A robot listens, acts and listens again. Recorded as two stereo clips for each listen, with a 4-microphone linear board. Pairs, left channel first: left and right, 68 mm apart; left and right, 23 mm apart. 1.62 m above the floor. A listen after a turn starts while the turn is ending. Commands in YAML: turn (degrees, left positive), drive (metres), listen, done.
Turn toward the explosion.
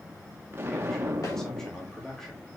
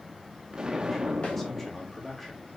turn: -35
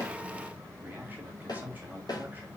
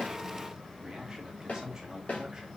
listen: true
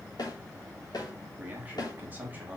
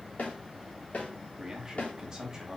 done: "I heard an explosion, but can't make it out now. It was about straight ahead or 110° right."